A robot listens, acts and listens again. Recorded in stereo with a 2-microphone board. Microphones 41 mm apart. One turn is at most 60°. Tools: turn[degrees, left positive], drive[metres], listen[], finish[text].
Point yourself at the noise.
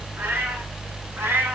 Thought: The cat meowing: about 70° right or 110° right.
Action: turn[-60]
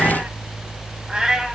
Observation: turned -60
Thought: So it is at 15° right.
Action: turn[-15]
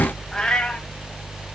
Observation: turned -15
Thought: The cat meowing is now 20° left.
Action: turn[20]
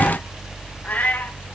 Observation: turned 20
Thought: The cat meowing is now 45° left.
Action: turn[45]
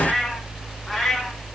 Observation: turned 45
Thought: The cat meowing is now 10° left.
Action: turn[10]
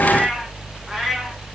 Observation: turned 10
Action: finish[Facing the cat meowing, 2 to 4 m away.]